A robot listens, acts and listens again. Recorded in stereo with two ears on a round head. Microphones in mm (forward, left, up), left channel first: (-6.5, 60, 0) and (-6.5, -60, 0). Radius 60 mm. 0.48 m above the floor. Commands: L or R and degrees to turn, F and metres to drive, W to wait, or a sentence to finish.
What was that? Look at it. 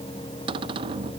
R40
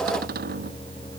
R100
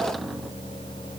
W
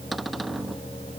Facing the cupboard door.